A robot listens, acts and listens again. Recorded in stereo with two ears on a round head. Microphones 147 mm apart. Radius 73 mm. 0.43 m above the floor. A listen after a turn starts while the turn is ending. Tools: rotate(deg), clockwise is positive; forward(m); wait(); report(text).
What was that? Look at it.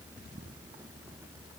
wait()
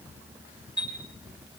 rotate(30)
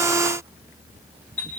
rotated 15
rotate(-10)
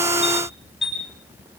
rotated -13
report("Facing the chime, over 4 m away.")